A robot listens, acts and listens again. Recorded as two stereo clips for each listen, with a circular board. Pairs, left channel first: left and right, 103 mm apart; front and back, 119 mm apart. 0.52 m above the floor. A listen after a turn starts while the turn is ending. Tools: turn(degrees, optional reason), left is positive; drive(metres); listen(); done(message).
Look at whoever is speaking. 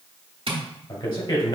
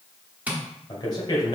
turn(degrees=50, reason="The man speaking: 50° left.")
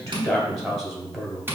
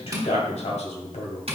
done("Found it: a man speaking, straight ahead, 1 to 2 m away.")